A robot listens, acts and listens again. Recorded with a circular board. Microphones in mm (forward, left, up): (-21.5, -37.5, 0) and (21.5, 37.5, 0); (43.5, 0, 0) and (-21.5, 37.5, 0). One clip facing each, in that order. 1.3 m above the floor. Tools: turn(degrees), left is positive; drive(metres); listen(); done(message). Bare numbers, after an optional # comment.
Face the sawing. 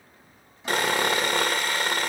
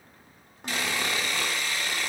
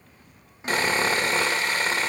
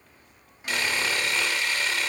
# The sawing: 80° right.
turn(-80)
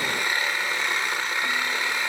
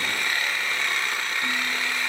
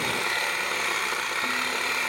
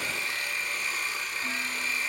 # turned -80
# The sawing is now 45° right.
turn(-45)
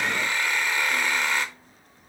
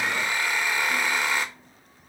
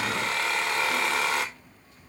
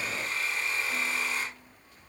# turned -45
# The sawing is now 20° right.
turn(-20)
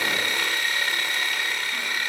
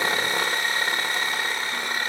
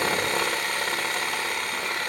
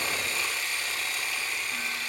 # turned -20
done("Facing the sawing, 1 to 2 m away.")